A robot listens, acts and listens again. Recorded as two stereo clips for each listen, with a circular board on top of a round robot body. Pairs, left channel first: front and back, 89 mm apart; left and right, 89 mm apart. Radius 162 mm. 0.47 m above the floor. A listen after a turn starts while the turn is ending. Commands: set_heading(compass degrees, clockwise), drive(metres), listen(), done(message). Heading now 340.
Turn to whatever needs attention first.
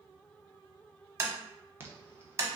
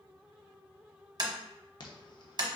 set_heading(225)
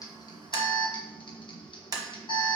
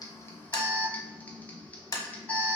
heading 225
set_heading(205)
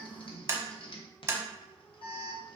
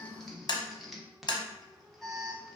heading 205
done("Found it: an alarm, straight ahead, 1 to 2 m away.")